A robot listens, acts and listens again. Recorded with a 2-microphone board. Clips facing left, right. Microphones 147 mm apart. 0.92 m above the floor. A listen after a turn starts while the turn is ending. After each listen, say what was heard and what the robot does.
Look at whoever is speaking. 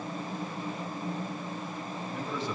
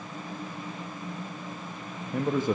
The man speaking: about 50° right or 130° right. Turn 50° right.
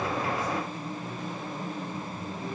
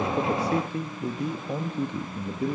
So it is at 80° right. Turn 80° right.
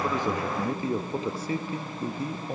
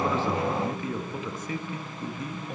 The man speaking is now 35° left. Turn 35° left.
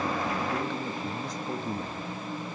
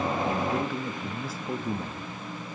Found it: a man speaking, straight ahead, 1 to 2 m away.